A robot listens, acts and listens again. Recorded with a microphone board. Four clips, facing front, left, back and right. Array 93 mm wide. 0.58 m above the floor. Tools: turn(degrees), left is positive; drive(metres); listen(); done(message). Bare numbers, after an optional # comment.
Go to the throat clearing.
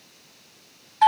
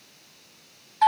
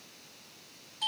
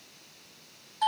listen()
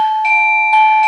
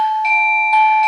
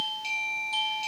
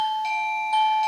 listen()
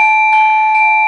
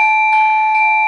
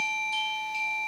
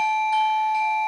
done("I can't make out throat clearing to turn to.")